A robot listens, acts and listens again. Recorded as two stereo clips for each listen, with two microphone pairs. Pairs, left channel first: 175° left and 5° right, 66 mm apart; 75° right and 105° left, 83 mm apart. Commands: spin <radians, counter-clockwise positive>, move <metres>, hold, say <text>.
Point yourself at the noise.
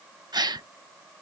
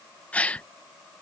say Facing the gasp.